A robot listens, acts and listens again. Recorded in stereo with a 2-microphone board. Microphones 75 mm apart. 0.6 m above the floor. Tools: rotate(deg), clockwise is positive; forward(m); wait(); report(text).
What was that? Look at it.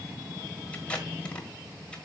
rotate(-15)
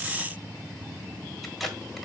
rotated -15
report("Facing the tape being pulled.")